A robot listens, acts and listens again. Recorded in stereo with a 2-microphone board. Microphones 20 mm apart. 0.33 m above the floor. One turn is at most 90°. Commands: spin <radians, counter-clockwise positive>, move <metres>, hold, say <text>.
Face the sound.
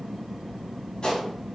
spin 1.05
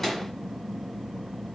say Found it: a gunshot, straight ahead, 1 to 2 m away.